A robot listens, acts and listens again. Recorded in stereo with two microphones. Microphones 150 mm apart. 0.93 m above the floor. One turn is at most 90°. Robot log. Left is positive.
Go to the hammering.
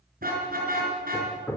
cmd yaw +30
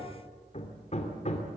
note: So it is at 135° left.
cmd yaw +90
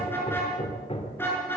note: The hammering is now 40° left.
cmd yaw +40
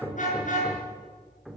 cmd fwd 1.0
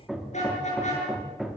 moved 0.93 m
cmd fwd 1.0
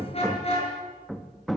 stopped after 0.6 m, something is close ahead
end: Arrived at the hammering, straight ahead.